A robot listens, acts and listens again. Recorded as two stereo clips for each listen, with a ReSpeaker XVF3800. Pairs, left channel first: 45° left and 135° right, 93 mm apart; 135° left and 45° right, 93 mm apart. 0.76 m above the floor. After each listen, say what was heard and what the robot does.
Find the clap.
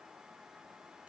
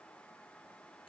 Keep listening.
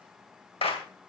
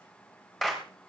The clap: 50° left. Turn 50° left.
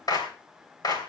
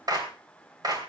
Found it: a clap, straight ahead, 2 to 4 m away.